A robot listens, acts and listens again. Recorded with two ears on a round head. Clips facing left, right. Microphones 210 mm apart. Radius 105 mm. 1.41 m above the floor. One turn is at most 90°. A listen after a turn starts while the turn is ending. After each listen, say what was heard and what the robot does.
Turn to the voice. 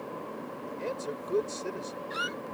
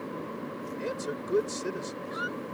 The man speaking: about 20° right or 160° right. Turn 20° right.
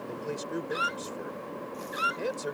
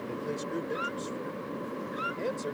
So it is at 10° left. Turn 10° left.
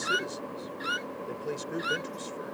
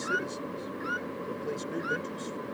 Keep listening.
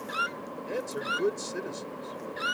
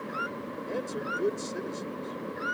The man speaking is now 10° left. Turn 10° left.
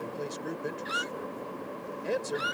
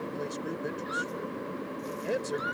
Facing the man speaking.